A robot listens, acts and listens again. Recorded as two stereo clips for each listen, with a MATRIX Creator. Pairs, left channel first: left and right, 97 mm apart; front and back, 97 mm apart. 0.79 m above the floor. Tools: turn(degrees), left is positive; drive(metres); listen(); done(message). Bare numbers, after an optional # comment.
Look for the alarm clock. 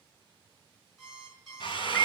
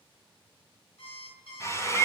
done("Facing the alarm clock.")